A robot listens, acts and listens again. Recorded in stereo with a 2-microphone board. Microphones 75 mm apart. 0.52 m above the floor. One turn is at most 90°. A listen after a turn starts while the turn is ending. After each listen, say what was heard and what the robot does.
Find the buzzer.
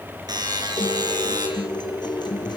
The buzzer: about 65° right or 115° right. Turn 65° right.
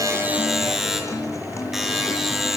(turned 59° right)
Facing the buzzer.